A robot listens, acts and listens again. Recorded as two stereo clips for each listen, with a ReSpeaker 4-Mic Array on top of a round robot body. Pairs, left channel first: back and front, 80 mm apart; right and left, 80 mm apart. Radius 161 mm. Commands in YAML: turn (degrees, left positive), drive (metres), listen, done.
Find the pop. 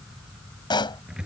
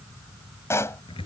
turn: -150
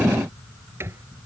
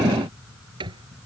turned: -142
turn: -10
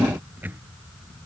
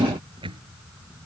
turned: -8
done: "Facing where the pop came from. I can't hear it now."